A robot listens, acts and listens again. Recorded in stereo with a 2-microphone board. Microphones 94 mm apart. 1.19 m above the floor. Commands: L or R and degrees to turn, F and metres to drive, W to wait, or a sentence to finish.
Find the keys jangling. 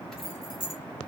L55
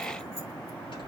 W
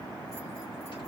W
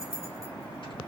L85
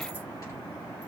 W
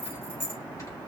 L20
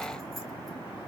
W
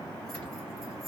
W
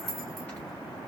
Found it: keys jangling, straight ahead.